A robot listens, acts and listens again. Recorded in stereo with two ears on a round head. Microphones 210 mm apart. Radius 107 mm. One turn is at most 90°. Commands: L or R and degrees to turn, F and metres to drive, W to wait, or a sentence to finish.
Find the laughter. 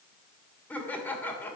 L30
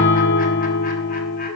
W
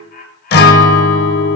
L90
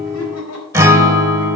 L70
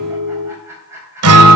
R10
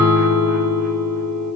W
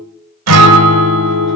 W
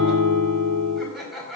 Found it: laughter, straight ahead, over 4 m away.